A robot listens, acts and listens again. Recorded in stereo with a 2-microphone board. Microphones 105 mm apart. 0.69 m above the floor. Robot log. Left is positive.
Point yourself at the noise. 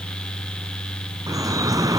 note: The dripping: about 35° right or 145° right.
cmd yaw -35
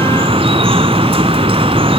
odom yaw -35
note: So it is at 110° right.
cmd yaw -110
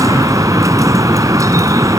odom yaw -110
note: The dripping is now 35° right.
cmd yaw -35
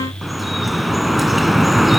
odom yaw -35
end: Found it: dripping, straight ahead, 1 to 2 m away.